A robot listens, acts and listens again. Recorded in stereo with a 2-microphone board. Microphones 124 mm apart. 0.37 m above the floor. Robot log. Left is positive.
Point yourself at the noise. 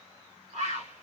note: The bird: about 75° right or 105° right.
cmd yaw -75
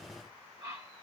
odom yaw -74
note: So it is at 30° right.
cmd yaw -30
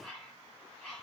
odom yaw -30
end: Facing the bird.